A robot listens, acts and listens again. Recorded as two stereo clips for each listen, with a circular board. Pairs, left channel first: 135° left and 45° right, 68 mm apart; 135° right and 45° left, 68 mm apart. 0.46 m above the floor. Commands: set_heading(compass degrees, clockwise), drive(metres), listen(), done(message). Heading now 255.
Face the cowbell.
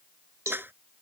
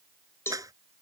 set_heading(340)
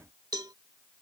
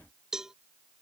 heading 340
set_heading(15)
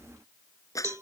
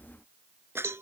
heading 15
done("Found it: a cowbell, straight ahead.")